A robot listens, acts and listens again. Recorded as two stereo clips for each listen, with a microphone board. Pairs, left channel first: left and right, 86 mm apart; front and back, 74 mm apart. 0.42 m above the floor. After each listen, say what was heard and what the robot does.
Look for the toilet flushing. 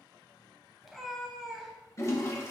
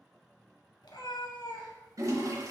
The toilet flushing: 145° left. Turn 145° left.
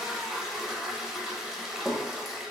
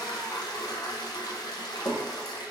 Facing the toilet flushing.